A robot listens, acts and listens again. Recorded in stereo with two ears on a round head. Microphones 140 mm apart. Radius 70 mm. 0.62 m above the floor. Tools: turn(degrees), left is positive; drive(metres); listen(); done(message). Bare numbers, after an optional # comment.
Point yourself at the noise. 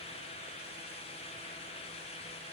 listen()
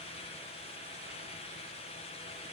listen()
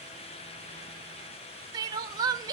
# The crying: about 25° right or 155° right.
turn(-25)
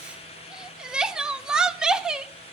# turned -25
done("Found it: crying, straight ahead, under 1 m away.")